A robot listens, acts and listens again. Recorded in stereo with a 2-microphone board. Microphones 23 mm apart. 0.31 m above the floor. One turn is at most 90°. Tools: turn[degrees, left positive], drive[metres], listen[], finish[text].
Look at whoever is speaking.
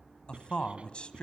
Thought: The man speaking: about 55° left or 125° left.
Action: turn[55]
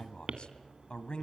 Thought: So it is at 60° left.
Action: turn[60]
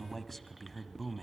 Action: finish[Facing the man speaking.]